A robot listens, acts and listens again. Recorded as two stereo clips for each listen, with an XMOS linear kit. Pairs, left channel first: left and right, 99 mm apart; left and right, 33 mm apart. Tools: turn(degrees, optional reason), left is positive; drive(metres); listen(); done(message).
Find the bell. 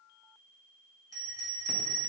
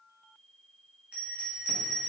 turn(degrees=-35, reason="The bell: about 35° right or 145° right.")
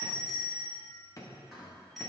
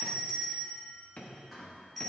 done("Facing the bell, 1 to 2 m away.")